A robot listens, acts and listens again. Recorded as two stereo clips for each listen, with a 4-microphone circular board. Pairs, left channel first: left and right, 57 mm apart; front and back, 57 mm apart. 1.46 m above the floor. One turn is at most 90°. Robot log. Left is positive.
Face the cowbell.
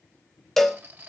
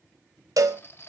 note: The cowbell: 175° left.
cmd yaw +90
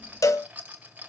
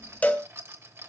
note: The cowbell is now 65° left.
cmd yaw +65
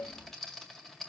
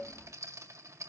cmd idle
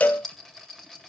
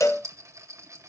note: The cowbell is now 25° left.
cmd yaw +25
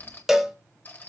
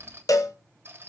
note: The cowbell is now 10° right.
cmd yaw -10
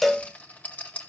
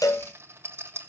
end: Found it: a cowbell, straight ahead.